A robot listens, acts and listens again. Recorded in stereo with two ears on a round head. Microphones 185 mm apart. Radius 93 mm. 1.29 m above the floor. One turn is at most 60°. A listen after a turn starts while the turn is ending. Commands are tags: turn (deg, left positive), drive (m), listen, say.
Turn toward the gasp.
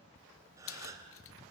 <turn deg="-15"/>
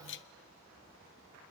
<listen/>
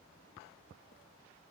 <say>I heard a gasp, but can't make it out now. It was about straight ahead or 150° right.</say>